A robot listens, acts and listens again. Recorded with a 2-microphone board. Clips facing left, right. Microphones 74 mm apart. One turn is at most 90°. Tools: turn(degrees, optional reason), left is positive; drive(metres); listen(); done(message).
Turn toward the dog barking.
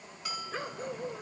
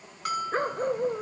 turn(degrees=-40, reason="The dog barking: about 40° right or 140° right.")
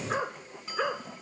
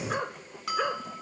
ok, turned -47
done("Found it: a dog barking, straight ahead.")